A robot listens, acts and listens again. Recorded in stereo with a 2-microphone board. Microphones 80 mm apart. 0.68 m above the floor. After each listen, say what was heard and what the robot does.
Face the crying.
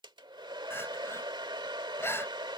The crying: about 30° left or 150° left. Turn 30° left.
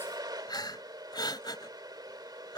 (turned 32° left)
So it is at 120° left. Turn 120° left.
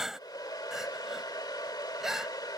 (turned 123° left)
Facing the crying.